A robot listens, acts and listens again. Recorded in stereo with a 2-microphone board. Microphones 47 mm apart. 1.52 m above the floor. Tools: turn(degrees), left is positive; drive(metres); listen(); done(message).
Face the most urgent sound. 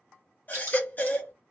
turn(degrees=40)
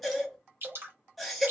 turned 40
done("Facing the baby crying.")